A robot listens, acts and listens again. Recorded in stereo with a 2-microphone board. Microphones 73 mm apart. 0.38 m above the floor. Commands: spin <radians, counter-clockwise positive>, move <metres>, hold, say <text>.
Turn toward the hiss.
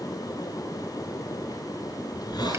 spin 1.22
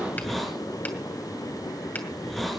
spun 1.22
say Found it: a hiss, straight ahead.